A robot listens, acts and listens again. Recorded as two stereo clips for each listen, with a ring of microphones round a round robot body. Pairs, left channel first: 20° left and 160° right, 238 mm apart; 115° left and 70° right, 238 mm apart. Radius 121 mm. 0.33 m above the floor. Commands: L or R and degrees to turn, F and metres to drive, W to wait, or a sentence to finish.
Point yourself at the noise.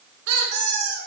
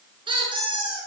R140
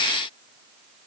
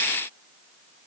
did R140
W
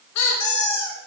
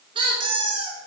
Facing the squeak, 1 to 2 m away.